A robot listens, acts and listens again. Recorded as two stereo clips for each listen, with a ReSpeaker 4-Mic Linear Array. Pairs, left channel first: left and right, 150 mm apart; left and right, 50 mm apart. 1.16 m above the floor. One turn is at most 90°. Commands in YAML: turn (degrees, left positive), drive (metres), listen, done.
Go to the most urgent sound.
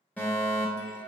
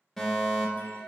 turn: 30
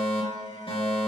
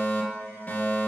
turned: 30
turn: 90
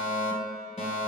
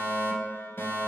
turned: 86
turn: 50
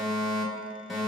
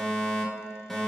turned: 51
drive: 1.0
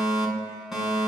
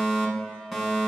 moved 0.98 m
drive: 1.0
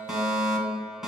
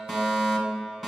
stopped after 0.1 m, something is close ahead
done: "Arrived at the fire alarm, straight ahead."